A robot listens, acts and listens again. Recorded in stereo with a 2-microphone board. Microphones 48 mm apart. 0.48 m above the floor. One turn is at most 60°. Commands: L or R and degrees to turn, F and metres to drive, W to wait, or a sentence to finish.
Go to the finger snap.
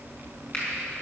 L25
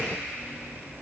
W
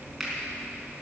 F1.0
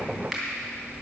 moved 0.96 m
F1.0
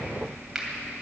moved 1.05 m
F1.0
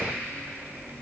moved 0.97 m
W
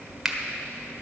R10
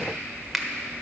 F1.0
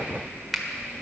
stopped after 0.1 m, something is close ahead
Arrived at the finger snap, straight ahead.